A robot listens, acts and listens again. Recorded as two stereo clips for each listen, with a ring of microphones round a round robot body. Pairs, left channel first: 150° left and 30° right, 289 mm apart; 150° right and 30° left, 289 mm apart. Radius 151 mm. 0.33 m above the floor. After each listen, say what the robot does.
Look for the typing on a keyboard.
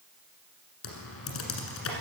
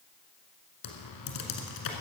Turn 165° right.
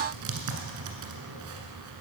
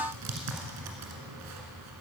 Facing the typing on a keyboard.